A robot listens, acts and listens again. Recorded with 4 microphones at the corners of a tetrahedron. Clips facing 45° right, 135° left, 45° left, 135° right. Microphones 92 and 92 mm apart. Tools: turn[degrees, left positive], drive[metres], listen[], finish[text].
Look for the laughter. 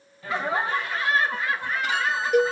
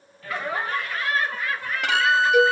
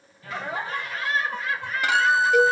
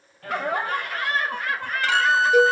Thought: The laughter: 110° right.
Action: turn[-110]
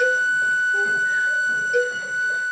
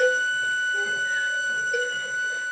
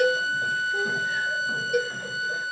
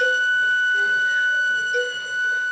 Action: listen[]
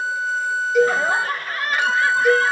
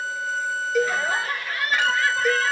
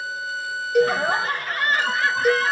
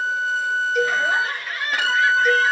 Action: finish[Found it: laughter, straight ahead.]